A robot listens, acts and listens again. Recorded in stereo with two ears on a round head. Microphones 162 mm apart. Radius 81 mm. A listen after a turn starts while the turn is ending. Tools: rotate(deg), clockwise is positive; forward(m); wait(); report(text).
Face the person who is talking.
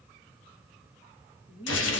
rotate(-30)
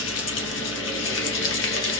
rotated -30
wait()
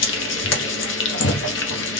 wait()
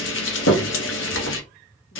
report("I heard a woman speaking, but can't make it out now. It was about straight ahead or 120° left.")